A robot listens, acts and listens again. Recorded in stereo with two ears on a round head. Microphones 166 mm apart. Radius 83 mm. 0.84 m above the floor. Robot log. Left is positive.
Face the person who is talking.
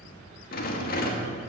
cmd idle
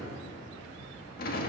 cmd idle
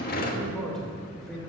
cmd yaw +30
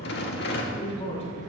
note: So it is at 145° left.
cmd yaw +145
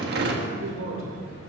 note: The man speaking is now 45° right.
cmd yaw -45
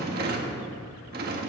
cmd idle
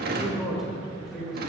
end: Found it: a man speaking, straight ahead, 2 to 4 m away.